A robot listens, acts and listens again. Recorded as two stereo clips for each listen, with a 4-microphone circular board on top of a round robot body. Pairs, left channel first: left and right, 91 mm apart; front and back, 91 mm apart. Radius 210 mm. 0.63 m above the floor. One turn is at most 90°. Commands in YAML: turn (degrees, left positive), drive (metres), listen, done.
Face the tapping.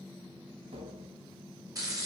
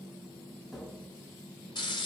turn: -90
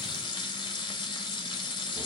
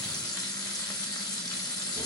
listen: true
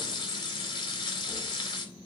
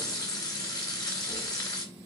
listen: true
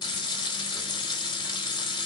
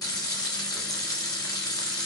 done: "Facing where the tapping came from. I can't hear it now."